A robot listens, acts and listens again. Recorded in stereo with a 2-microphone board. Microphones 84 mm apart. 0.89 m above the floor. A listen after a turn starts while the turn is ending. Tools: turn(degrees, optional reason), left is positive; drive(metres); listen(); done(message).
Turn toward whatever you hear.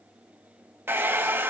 turn(degrees=-25, reason="The hair dryer: about 25° right or 155° right.")
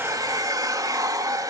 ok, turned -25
turn(degrees=-125, reason="So it is at 125° right.")
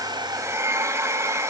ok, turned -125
turn(degrees=-40, reason="The hair dryer is now 40° right.")
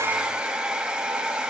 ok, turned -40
turn(degrees=-10, reason="The hair dryer is now 10° right.")
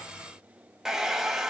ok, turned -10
done("Facing the hair dryer, 1 to 2 m away.")